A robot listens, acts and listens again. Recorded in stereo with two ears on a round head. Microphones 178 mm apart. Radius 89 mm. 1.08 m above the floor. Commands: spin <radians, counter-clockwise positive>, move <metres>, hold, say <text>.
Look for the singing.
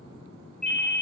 hold
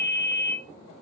hold
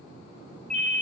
say I can't make out singing, only a ringtone.